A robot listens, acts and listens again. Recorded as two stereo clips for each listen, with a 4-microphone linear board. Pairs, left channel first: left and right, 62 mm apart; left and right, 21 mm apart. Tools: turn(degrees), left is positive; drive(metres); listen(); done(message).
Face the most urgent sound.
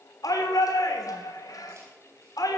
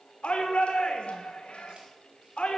turn(degrees=90)
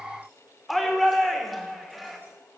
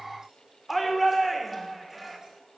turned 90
done("Facing the shout.")